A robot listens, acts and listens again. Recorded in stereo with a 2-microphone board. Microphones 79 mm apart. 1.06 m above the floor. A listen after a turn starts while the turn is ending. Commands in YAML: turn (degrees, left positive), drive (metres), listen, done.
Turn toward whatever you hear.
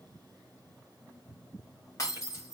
turn: 40
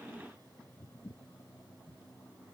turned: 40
listen: true
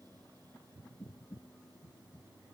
done: "I heard breaking glass, but can't make it out now. It was about straight ahead or 100° left."